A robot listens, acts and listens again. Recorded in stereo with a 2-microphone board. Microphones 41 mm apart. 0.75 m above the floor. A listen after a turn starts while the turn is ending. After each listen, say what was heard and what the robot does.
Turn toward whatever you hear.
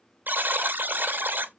The buzzer: about 50° right or 130° right. Turn 50° right.
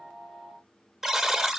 Found it: a buzzer, straight ahead.